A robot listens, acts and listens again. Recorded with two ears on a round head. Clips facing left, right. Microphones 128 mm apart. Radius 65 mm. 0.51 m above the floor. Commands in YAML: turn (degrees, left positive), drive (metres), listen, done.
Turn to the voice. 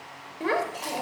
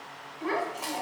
turn: 70
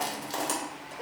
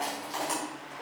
listen: true
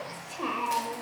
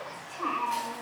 turn: 35
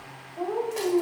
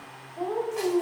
done: "Facing the child speaking, under 1 m away."